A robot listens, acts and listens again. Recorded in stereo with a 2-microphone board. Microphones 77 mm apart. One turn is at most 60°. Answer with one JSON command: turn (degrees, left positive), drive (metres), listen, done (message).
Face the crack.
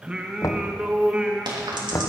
{"turn": -60}
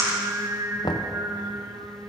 {"turn": -45}
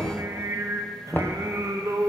{"done": "I heard a crack from this way, but can't make it out now."}